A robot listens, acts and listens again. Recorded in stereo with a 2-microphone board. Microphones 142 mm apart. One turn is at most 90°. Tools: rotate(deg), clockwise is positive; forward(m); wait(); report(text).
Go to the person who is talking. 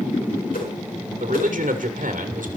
rotate(70)
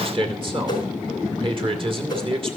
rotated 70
rotate(40)
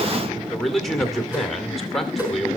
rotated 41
forward(1.0)
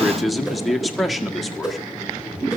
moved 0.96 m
forward(1.0)
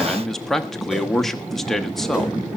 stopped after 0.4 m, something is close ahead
report("I am next to the man speaking.")